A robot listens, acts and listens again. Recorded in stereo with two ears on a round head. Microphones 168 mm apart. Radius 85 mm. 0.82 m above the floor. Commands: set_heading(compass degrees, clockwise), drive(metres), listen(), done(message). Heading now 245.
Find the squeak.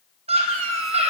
set_heading(320)
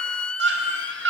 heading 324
done("Found it: a squeak, straight ahead.")